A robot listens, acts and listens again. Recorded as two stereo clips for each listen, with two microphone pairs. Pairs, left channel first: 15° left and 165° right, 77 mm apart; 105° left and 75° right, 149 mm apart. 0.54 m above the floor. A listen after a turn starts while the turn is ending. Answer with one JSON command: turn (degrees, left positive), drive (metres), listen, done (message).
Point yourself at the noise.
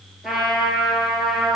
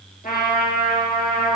{"turn": 110}
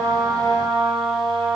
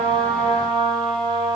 {"turn": -10}
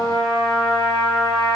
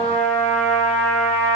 {"done": "Found it: a trumpet, straight ahead."}